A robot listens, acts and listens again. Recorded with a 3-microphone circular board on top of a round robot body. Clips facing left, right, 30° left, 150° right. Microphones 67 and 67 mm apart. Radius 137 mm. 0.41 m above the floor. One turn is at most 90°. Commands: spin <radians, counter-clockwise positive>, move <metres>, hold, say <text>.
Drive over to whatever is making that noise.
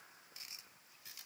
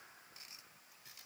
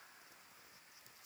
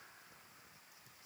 hold
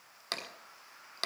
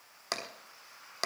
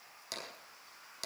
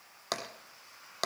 spin -1.57
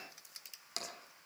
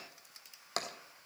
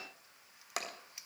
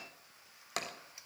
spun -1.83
spin -0.96
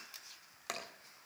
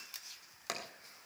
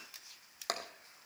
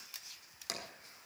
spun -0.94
move 1.0
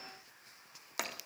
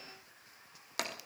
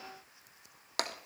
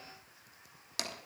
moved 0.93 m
move 1.0
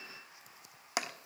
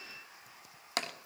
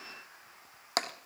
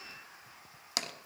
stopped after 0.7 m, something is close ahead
spin 0.26
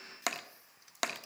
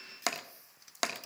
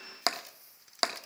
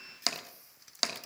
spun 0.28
say Arrived at the tapping, straight ahead.